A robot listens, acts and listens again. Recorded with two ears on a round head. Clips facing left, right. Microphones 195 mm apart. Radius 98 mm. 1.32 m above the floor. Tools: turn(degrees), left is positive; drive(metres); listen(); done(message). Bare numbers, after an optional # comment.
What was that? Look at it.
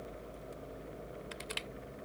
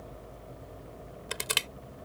turn(-90)
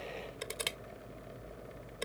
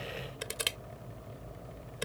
done("Found it: crushing, straight ahead.")